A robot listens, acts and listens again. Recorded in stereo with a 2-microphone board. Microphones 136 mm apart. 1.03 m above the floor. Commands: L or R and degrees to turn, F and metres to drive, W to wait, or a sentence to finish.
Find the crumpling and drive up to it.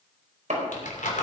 L75
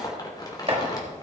L30
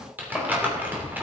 R15
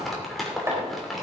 F1.0
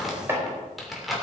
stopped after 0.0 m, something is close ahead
Blocked. The crumpling is further on, straight ahead.